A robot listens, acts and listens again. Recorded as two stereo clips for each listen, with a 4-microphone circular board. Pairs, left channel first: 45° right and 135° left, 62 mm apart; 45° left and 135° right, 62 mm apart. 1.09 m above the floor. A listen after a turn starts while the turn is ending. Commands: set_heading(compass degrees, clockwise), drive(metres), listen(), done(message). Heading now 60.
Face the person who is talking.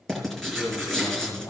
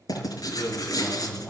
set_heading(85)
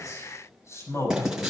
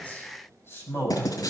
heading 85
done("Facing the man speaking.")